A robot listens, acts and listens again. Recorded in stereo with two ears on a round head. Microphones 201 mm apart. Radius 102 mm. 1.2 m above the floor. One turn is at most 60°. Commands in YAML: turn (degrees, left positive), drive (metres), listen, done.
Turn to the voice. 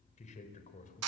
turn: 40
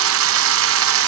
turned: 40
listen: true
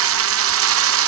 listen: true
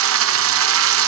done: "I heard a man speaking, but can't make it out now. It was about straight ahead or 100° left."